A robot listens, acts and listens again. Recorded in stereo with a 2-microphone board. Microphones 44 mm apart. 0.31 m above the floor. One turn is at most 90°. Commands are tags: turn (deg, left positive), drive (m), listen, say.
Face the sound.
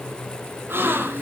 <turn deg="-60"/>
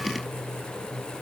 <listen/>
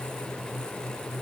<say>I heard a gasp, but can't make it out now. It was about straight ahead or 60° right.</say>